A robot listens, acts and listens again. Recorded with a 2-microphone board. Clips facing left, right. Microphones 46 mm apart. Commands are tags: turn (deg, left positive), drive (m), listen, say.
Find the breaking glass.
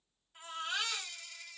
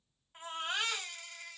<listen/>
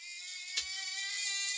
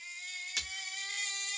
<turn deg="-70"/>
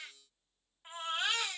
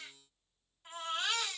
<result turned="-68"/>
<listen/>
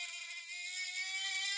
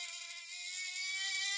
<say>I heard breaking glass, but can't make it out now. It was about straight ahead or 40° right.</say>